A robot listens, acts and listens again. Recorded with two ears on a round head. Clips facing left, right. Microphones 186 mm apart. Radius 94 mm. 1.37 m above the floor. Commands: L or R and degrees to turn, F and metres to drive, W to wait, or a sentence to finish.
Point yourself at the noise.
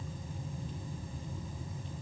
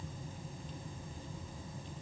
W
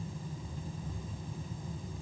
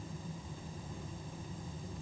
W
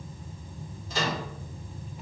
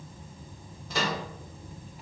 R50
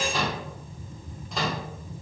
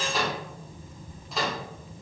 Found it: a microwave, straight ahead, under 1 m away.